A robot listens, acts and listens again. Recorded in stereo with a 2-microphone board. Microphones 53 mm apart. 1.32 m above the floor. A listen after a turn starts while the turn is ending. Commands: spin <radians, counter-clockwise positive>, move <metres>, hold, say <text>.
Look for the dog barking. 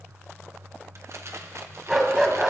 spin -0.52
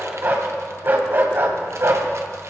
spin -2.18
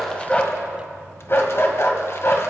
spin 0.96
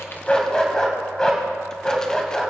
spin 0.26
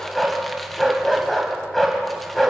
say Facing the dog barking.